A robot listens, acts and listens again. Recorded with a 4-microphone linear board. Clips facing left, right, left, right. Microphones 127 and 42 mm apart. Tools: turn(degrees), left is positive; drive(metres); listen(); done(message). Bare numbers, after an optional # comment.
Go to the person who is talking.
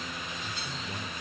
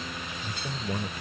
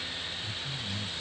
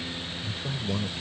# The man speaking: about 65° right or 115° right.
turn(-65)
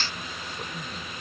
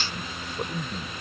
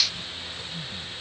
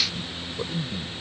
# So it is at 40° right.
turn(-40)
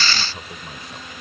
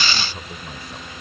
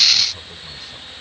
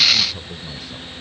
drive(1.0)
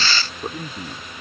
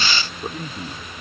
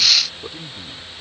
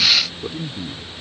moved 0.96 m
drive(1.0)
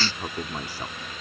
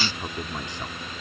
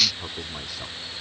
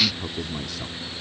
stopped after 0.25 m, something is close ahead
# The man speaking is now 10° left.
turn(10)
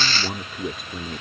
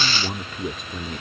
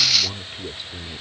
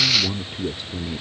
done("Arrived at the man speaking, straight ahead.")